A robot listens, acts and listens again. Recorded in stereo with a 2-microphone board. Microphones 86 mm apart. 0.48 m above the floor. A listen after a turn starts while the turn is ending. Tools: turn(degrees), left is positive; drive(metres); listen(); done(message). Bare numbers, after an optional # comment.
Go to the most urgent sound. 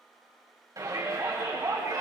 # The shout: about 45° right or 135° right.
turn(-45)
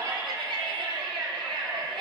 # So it is at 85° right.
turn(-85)
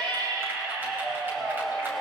# The shout is now 25° right.
turn(-25)
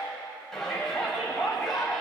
drive(1.0)
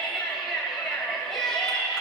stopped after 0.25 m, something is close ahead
done("Something is in my way. I am facing the shout but have not reached it.")